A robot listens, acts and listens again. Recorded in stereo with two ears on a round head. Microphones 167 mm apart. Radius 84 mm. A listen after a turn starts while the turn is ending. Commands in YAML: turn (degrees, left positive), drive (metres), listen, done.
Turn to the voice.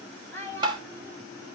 turn: 30
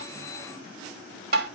listen: true
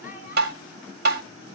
listen: true
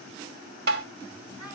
done: "I heard a child speaking, but can't make it out now. It was about 20° right or 140° left."